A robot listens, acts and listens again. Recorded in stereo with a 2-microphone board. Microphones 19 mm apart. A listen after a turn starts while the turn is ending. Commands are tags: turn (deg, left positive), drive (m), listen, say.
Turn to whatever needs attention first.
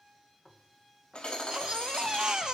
<turn deg="-45"/>
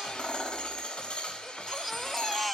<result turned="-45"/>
<turn deg="-10"/>
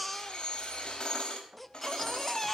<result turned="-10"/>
<say>Found it: a baby crying, straight ahead.</say>